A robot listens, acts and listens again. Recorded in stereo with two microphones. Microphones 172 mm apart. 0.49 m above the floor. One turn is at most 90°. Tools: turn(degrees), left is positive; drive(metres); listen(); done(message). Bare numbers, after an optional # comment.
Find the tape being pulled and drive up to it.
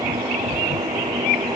listen()
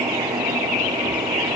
listen()
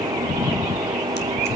done("I can't make out tape being pulled.")